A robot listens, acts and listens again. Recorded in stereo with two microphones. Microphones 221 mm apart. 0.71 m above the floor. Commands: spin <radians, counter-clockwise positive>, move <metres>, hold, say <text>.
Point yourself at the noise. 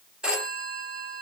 spin -0.52
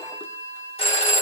spin 0.44
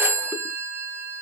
spin -0.17
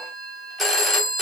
say Found it: a phone ringing, straight ahead.